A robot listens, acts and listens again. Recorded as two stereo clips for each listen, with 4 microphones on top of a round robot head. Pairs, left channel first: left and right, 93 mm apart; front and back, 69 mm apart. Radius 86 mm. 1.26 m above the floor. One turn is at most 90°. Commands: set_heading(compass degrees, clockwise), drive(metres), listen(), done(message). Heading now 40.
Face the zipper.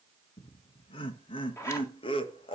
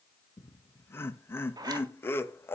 set_heading(310)
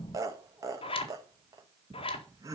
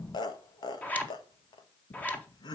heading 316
set_heading(251)
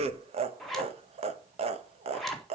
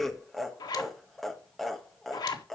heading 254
done("Found it: a zipper, straight ahead.")